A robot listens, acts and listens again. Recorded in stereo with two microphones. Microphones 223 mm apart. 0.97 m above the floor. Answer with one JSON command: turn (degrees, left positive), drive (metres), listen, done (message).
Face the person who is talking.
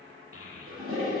{"turn": 90}
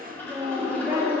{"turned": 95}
{"turn": -15}
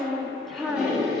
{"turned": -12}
{"done": "Found it: a child speaking, straight ahead, 1 to 2 m away."}